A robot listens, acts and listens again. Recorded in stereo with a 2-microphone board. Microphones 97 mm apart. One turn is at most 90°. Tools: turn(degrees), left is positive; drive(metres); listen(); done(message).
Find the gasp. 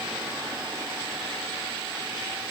listen()
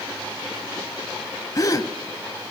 turn(degrees=40)
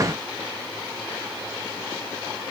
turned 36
listen()
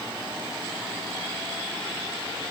done("I heard a gasp, but can't make it out now. It was about straight ahead or 105° left.")